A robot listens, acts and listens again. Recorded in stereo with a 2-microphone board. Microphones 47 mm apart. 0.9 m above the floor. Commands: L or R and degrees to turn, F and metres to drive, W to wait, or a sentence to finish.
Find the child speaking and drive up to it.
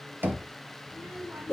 R55
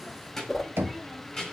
F1.0
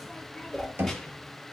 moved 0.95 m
W
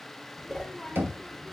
F1.0
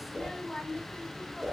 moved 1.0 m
L10
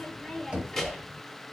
F1.0
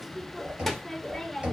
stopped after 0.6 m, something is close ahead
I am next to the child speaking.